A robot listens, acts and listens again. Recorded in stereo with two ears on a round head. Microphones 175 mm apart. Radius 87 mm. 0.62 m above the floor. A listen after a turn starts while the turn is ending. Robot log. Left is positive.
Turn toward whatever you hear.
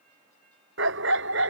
note: The dog barking: about 65° right or 115° right.
cmd yaw -65
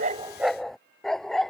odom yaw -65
end: Facing the dog barking.